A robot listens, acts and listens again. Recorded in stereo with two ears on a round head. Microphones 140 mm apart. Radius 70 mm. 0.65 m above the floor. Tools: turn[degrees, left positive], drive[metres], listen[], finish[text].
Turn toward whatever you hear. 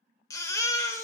Thought: The baby crying: about 20° left or 160° left.
Action: turn[20]
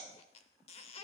Action: listen[]
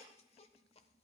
Action: listen[]
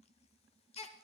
Thought: So it is at 140° left.
Action: turn[140]
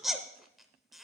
Action: finish[Found it: a baby crying, straight ahead, under 1 m away.]